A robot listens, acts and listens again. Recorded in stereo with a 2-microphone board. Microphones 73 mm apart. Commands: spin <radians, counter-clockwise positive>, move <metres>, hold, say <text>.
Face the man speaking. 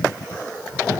hold
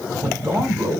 spin -0.61
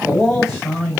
say Facing the man speaking, 2 to 4 m away.